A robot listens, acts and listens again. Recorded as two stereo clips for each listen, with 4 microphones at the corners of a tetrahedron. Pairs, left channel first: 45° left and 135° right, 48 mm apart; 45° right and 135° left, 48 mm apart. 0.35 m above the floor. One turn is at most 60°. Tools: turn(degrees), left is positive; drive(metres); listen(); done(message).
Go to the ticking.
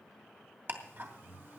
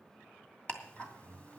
turn(degrees=-60)
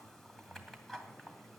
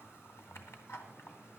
turn(degrees=-40)
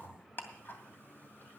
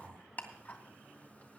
drive(metres=1.0)
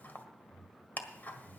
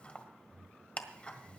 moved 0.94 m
turn(degrees=10)
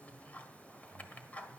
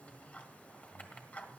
drive(metres=1.0)
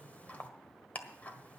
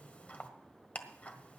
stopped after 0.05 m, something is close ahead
done("I am next to the ticking.")